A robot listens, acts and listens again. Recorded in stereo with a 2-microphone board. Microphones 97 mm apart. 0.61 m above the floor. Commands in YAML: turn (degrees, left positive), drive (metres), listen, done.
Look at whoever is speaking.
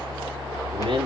turn: -70
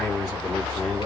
done: "Found it: a man speaking, straight ahead, over 4 m away."